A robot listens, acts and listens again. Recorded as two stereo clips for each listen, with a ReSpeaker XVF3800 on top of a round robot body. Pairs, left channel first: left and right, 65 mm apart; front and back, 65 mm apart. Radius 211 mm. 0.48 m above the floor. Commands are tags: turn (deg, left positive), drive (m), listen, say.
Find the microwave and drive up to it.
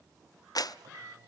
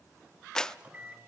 <turn deg="-115"/>
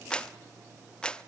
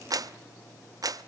<listen/>
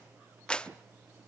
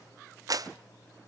<turn deg="-25"/>
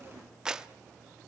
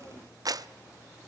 <listen/>
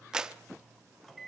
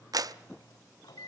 <drive m="1.0"/>
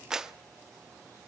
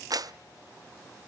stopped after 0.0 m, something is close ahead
<listen/>
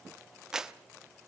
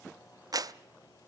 <listen/>
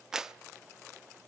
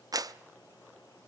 <say>Facing where the microwave came from. I can't hear it now. I did not reach it.</say>